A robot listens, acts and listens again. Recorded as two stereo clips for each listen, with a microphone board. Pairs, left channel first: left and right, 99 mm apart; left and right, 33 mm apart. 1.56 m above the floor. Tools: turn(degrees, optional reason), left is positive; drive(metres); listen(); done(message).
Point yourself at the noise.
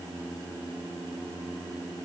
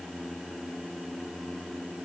listen()
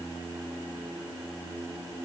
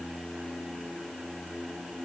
listen()
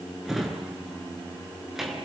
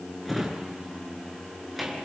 turn(degrees=-30)
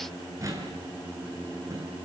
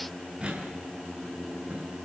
turn(degrees=-145, reason="So it is at 145° right.")
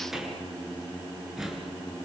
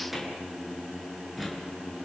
done("Facing the drawer, over 4 m away.")